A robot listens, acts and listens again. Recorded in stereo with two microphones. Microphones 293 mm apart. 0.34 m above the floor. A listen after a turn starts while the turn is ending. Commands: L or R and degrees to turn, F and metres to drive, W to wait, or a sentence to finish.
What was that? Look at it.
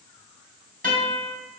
R30
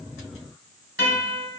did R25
R120
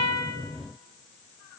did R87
R35
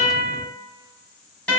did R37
Facing the guitar.